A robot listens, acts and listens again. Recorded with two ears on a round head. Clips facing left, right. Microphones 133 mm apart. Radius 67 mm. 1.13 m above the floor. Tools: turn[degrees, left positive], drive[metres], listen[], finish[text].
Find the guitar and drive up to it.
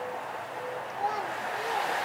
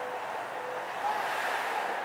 Action: listen[]
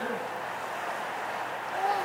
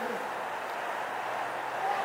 Action: listen[]
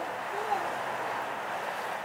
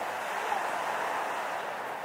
Action: finish[I can't make out a guitar to turn to.]